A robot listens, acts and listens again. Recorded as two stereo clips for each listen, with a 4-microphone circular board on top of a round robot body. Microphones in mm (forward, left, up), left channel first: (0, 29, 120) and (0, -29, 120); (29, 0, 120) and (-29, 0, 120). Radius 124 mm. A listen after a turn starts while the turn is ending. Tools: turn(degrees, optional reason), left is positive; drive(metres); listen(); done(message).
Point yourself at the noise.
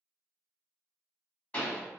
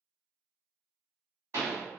turn(degrees=155, reason="The pop: 155° left.")
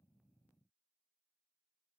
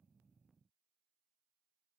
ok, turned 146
turn(degrees=10, reason="Nothing new. It was at 10° left.")
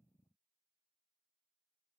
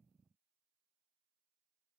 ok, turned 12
done("I heard a pop from this way, but can't make it out now.")